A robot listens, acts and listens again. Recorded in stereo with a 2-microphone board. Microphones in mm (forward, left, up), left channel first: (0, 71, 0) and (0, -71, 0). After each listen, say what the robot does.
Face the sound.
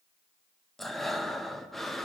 Turn 30° left.
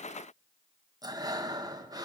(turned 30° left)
Turn 25° right.
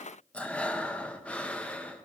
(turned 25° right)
Turn 10° left.
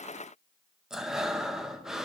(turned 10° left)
Found it: breathing, straight ahead, under 1 m away.